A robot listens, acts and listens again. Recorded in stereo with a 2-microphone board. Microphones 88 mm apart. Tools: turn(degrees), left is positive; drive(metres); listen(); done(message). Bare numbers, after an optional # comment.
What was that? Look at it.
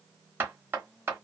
# The knocking: about 25° right or 155° right.
turn(-25)
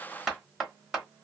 done("Found it: knocking, straight ahead, 1 to 2 m away.")